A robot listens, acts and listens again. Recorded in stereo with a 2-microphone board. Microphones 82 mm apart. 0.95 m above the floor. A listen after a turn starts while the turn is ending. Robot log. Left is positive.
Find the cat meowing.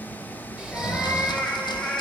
cmd yaw +30
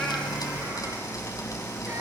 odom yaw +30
cmd idle
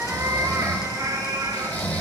note: So it is at 50° right.
cmd yaw -50
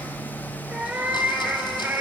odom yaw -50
note: The cat meowing is now 15° right.
cmd yaw -15
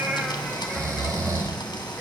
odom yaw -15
cmd idle
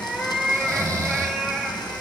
end: Facing the cat meowing, 2 to 4 m away.